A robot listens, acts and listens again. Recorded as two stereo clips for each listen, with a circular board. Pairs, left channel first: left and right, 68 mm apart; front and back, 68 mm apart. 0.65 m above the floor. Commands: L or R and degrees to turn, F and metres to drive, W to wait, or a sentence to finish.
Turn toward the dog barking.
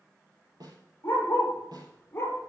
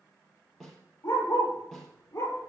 L30
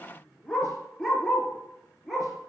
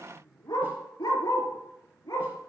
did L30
Facing the dog barking, 2 to 4 m away.